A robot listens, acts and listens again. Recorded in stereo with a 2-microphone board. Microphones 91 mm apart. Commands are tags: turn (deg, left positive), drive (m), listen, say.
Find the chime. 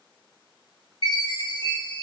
<turn deg="65"/>
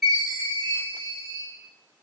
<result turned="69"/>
<say>Found it: a chime, straight ahead, 1 to 2 m away.</say>